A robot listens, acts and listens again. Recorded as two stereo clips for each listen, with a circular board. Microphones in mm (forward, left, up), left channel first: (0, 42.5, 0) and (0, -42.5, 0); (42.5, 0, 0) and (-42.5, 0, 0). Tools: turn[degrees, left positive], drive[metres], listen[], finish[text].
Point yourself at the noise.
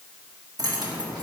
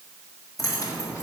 Thought: The keys jangling: 50° right.
Action: turn[-50]
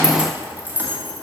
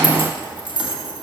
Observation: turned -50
Thought: The keys jangling is now 25° right.
Action: turn[-25]
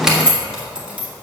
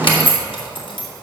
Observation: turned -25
Thought: The keys jangling is now 10° right.
Action: turn[-10]
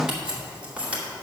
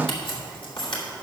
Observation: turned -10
Thought: The keys jangling is now 15° right.
Action: turn[-15]
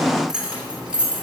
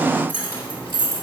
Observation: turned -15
Thought: The keys jangling is now 10° right.
Action: turn[-10]
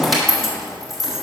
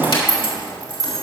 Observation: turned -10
Action: finish[Found it: keys jangling, straight ahead.]